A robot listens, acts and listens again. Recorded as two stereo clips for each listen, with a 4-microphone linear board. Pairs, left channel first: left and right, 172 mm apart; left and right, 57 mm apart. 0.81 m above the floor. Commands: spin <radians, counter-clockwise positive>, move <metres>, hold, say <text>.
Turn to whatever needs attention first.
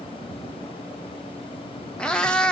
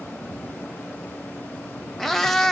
hold
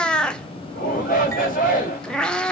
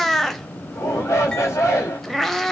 spin 0.96
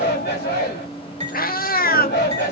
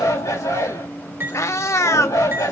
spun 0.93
spin 1.31
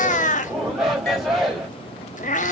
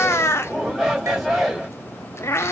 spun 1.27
say Facing the shout, 2 to 4 m away.